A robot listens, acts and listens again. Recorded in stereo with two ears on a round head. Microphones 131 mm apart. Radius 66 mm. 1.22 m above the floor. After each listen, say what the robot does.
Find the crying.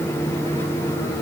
Keep listening.
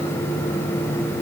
Keep listening.
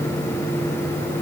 I can't make out crying.